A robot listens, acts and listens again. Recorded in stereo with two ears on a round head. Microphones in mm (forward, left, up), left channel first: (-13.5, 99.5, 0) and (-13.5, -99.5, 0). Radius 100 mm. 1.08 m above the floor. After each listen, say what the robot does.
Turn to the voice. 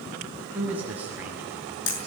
Turn 30° right.
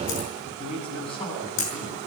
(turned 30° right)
Turn 25° left.
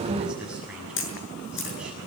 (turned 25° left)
Found it: a man speaking, straight ahead, over 4 m away.